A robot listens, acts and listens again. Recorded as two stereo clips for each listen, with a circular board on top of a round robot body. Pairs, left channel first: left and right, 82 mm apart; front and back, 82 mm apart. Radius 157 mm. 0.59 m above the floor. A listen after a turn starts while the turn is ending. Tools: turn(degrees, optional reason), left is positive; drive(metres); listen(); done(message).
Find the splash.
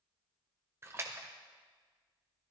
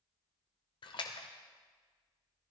turn(degrees=-30, reason="The splash: 30° right.")
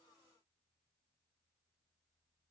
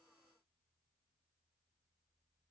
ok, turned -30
done("Facing where the splash came from. I can't hear it now.")